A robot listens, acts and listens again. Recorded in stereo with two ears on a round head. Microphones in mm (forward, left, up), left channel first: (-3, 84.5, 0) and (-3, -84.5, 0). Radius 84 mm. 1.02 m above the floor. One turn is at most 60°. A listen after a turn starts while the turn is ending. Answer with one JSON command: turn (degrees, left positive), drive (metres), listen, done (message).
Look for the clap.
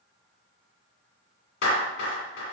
{"turn": 60}
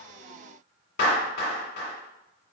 {"turn": 55}
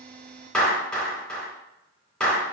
{"done": "Found it: a clap, straight ahead, 1 to 2 m away."}